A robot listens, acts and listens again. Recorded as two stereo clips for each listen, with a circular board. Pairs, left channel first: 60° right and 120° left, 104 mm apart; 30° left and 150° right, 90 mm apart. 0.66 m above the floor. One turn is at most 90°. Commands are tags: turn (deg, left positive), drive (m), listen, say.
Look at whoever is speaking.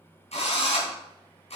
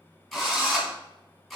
<listen/>
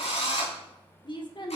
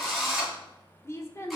<turn deg="-25"/>
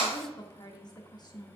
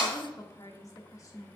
<turn deg="-15"/>
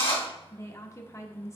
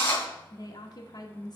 <say>Facing the woman speaking.</say>